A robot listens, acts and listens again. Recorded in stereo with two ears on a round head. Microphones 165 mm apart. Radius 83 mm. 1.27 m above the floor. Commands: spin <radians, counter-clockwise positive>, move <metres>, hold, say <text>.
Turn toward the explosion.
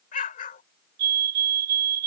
spin 0.79
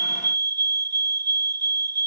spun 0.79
hold
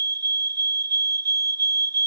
say I heard an explosion, but can't make it out now. It was about straight ahead or 90° left.